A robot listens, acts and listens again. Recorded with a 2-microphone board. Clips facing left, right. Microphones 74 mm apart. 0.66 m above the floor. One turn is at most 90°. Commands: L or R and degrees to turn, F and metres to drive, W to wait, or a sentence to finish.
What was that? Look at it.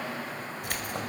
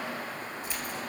L70
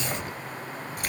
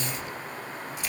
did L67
L55
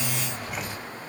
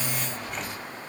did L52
Found it: keys jangling, straight ahead, 2 to 4 m away.